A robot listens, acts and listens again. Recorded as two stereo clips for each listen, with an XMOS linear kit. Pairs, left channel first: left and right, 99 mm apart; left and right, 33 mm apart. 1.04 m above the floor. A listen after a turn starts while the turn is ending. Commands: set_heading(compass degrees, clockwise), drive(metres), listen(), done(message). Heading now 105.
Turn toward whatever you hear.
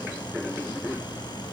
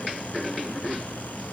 listen()
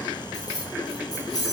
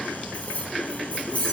set_heading(70)
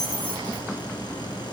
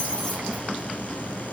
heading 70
listen()
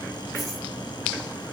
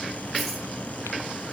listen()
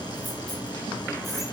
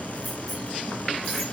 done("I heard keys jangling, but can't make it out now. It was about straight ahead or 110° left.")